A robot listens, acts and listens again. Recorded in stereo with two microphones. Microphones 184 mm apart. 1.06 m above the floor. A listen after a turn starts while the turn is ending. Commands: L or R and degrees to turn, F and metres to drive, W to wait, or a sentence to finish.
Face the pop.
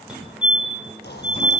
L65
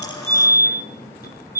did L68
W
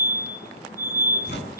I heard a pop, but can't make it out now. It was about straight ahead or 45° left.